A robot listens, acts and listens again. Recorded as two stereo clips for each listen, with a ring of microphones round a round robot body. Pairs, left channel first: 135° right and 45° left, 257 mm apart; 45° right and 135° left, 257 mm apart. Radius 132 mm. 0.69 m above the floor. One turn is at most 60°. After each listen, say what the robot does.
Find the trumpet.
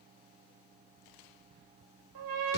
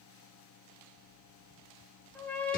Turn 40° left.
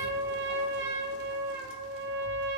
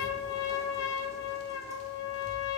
Found it: a trumpet, straight ahead.